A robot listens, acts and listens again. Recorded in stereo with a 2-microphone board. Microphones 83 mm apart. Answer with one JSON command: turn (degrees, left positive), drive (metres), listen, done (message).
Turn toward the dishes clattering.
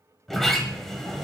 {"listen": true}
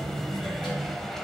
{"listen": true}
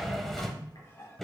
{"turn": 35}
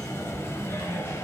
{"listen": true}
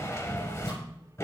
{"listen": true}
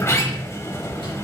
{"done": "I heard dishes clattering, but can't make it out now. It was about straight ahead or 110° left."}